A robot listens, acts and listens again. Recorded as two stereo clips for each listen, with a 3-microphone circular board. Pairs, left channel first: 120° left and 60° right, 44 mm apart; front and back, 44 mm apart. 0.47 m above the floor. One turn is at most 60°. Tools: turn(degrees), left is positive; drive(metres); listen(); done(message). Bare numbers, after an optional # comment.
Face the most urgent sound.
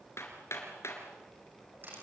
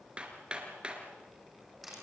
listen()
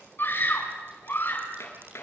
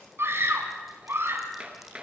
# The scream: 155° left.
turn(60)
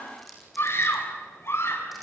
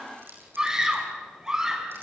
# The scream is now 105° left.
turn(60)
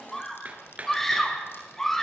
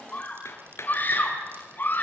# The scream is now 40° left.
turn(40)
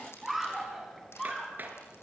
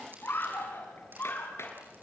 # The scream is now 30° left.
turn(30)
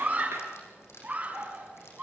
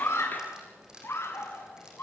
done("Found it: a scream, straight ahead.")